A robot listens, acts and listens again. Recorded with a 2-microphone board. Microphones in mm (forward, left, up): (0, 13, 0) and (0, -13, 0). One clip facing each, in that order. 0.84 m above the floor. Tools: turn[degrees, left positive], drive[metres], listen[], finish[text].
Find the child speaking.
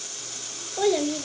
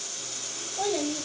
Action: turn[90]
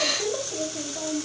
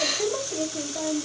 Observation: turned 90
Thought: So it is at 45° right.
Action: turn[-45]
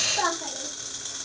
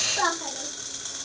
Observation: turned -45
Thought: The child speaking is now 20° right.
Action: turn[-20]
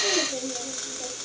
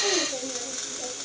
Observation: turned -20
Thought: The child speaking is now 25° right.
Action: turn[-25]
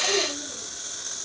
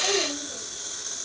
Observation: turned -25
Thought: The child speaking is now 15° right.
Action: turn[-15]
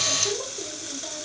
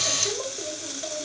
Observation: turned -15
Action: finish[Found it: a child speaking, straight ahead.]